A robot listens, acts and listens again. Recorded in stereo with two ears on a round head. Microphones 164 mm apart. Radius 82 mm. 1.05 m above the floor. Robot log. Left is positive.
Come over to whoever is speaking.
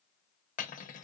cmd idle
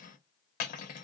cmd idle
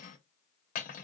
end: I can't make out anyone speaking, only cutlery clinking.